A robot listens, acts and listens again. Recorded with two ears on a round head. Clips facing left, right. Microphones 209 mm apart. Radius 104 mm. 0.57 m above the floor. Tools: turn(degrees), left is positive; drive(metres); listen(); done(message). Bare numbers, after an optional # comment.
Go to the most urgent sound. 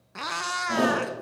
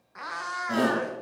# The shout: about 20° right or 160° right.
turn(-20)
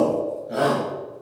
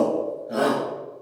drive(1.0)
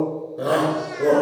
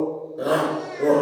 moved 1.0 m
drive(1.0)
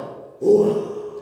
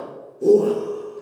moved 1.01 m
# The shout is now 10° right.
turn(-10)
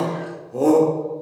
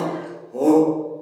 drive(1.0)
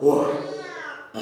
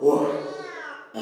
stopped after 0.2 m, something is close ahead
done("Arrived at the shout, straight ahead.")